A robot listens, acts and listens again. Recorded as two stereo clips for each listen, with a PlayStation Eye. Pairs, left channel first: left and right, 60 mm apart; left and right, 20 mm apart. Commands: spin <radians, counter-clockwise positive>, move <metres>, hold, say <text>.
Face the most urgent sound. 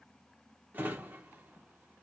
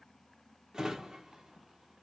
hold
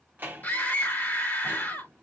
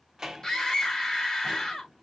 spin 0.52
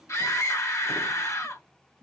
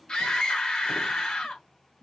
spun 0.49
spin 2.18
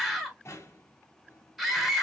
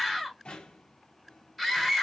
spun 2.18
say Facing the scream.